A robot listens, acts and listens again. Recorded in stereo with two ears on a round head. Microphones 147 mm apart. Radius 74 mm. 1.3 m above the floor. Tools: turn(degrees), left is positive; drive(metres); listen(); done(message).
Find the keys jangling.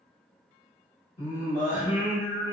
listen()
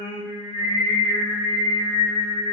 listen()
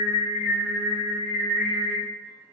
done("I can't make out keys jangling, only singing.")